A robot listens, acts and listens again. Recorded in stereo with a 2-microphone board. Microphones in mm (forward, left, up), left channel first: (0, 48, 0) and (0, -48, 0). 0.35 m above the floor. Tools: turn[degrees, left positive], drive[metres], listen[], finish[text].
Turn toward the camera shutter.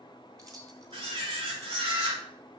Thought: The camera shutter: about 70° right or 110° right.
Action: turn[-70]
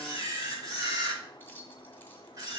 Thought: So it is at 40° right.
Action: turn[-40]
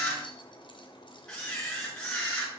Thought: The camera shutter is now 10° left.
Action: turn[10]
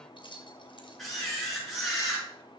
Action: finish[Facing the camera shutter, over 4 m away.]